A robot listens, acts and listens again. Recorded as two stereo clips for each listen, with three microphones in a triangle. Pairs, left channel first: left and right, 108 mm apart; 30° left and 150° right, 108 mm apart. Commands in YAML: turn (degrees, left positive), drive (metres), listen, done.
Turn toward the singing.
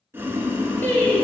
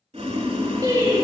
turn: 165
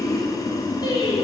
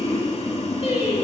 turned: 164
turn: 45
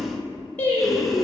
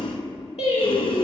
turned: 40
turn: 25
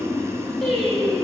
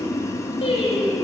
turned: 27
done: "Found it: singing, straight ahead."